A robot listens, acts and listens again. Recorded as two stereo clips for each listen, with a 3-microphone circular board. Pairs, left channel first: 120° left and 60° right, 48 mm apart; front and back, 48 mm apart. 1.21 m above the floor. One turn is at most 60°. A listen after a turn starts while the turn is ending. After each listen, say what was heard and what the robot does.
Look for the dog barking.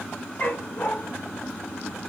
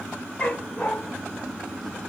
The dog barking: 65° left. Turn 60° left.
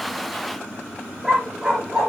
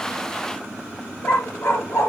The dog barking is now 10° left. Turn 10° left.
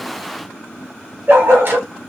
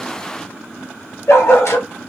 The dog barking is now 20° right. Turn 20° right.
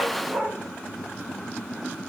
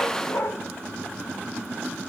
The dog barking is now 10° right. Turn 10° right.
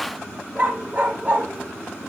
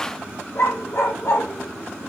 Found it: a dog barking, straight ahead, 2 to 4 m away.